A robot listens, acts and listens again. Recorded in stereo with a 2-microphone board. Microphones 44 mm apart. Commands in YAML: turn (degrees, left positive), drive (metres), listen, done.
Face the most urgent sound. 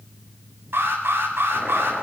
turn: -70
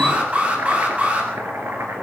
turn: -40
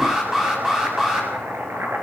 turn: -15
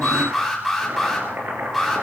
done: "Facing the alarm, over 4 m away."